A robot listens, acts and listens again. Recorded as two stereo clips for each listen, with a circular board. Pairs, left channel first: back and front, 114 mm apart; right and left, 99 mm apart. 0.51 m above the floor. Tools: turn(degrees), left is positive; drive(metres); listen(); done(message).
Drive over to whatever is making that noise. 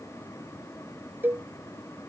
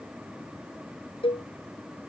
turn(degrees=-70)
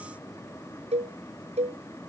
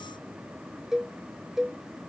drive(metres=1.0)
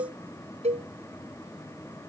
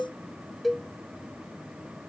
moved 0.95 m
drive(metres=1.0)
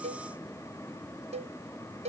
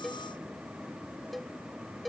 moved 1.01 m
drive(metres=1.0)
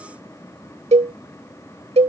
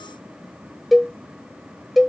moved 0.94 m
drive(metres=1.0)
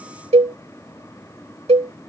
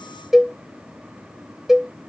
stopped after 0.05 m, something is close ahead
done("I am next to the cowbell.")